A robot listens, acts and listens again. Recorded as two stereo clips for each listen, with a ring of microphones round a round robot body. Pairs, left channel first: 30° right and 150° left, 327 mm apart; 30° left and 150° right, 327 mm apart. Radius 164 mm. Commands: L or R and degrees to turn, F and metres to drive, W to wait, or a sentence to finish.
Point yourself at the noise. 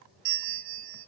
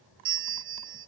L155
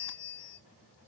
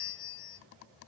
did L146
L10
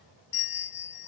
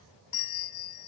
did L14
Facing the bell.